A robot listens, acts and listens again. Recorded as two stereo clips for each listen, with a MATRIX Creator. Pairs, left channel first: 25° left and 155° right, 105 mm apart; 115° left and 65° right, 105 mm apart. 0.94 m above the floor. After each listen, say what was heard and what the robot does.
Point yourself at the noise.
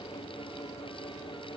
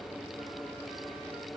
Keep listening.
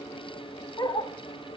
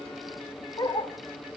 The dog barking: 65° left. Turn 65° left.
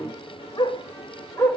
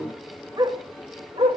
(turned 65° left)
The dog barking is now 45° right. Turn 45° right.
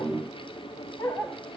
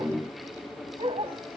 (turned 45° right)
The dog barking is now 45° right. Turn 45° right.
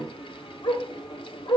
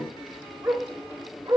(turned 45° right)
Facing the dog barking, 2 to 4 m away.